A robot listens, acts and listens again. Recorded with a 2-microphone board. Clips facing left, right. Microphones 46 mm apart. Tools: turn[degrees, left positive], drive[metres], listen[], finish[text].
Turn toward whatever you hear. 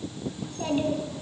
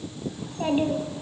Thought: The child speaking: about 20° right or 160° right.
Action: turn[-20]
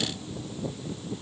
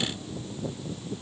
Action: listen[]
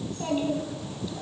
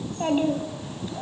Thought: So it is at 135° right.
Action: turn[-135]
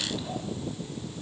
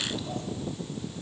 Action: listen[]
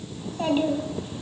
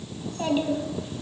Thought: The child speaking is now 10° left.
Action: turn[10]
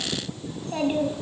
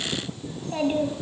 Action: finish[Found it: a child speaking, straight ahead.]